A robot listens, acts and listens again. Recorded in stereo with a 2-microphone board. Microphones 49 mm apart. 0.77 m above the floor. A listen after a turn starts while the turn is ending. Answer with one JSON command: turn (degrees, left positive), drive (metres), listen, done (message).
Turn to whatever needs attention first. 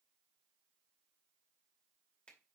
{"listen": true}
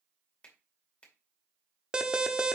{"turn": -20}
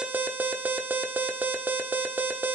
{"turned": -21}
{"turn": -140}
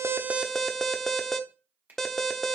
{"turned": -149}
{"done": "Found it: an alarm, straight ahead, under 1 m away."}